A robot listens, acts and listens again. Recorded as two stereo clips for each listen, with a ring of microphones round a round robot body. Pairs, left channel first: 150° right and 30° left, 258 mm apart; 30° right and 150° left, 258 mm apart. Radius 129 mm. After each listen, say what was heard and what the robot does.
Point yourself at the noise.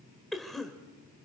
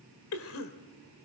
The cough: 60° right. Turn 60° right.
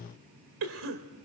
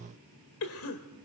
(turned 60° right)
Facing the cough, 1 to 2 m away.